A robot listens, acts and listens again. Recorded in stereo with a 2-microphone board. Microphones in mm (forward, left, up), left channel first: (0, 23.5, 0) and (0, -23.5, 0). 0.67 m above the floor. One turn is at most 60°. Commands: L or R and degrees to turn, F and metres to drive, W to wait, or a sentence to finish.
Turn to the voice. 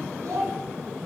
R60
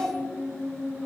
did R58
R35
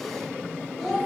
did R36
Facing the child speaking.